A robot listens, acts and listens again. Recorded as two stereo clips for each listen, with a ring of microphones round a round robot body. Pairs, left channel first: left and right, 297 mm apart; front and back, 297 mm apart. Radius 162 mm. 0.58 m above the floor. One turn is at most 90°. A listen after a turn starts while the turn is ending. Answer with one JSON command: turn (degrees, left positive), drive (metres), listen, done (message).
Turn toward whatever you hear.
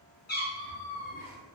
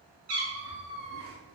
{"turn": 90}
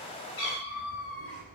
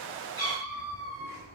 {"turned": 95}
{"turn": 80}
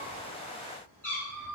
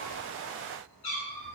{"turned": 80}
{"turn": 10}
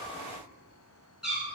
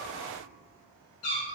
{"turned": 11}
{"done": "Facing the cat meowing, over 4 m away."}